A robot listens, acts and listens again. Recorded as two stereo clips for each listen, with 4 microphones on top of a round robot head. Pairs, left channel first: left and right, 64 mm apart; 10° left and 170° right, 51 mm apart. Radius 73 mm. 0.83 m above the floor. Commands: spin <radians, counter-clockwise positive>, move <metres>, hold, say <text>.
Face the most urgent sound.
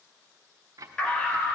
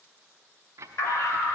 spin 0.26
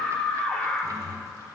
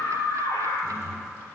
spin 0.17
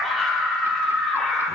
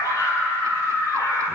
say Found it: a scream, straight ahead.